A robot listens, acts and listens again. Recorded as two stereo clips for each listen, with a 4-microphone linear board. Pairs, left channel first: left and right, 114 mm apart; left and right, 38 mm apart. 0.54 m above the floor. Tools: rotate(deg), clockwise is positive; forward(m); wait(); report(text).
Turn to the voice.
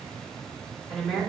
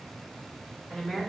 rotate(-30)
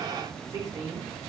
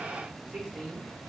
rotate(30)
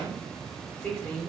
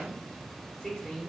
rotate(-15)
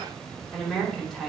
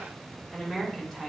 report("Facing the woman speaking.")